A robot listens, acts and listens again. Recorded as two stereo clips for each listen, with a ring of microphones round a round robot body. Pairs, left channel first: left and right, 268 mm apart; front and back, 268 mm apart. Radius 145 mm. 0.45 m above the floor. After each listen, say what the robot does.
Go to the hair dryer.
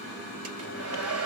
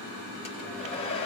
Turn 70° right.
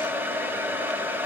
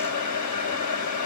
Turn 10° right.
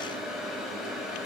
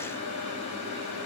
Drive 1.0 m forward.
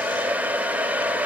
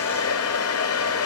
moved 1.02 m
Drive 1.0 m forward.
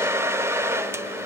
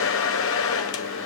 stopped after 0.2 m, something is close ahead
Turn 10° right.
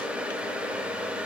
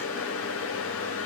Arrived at the hair dryer, straight ahead.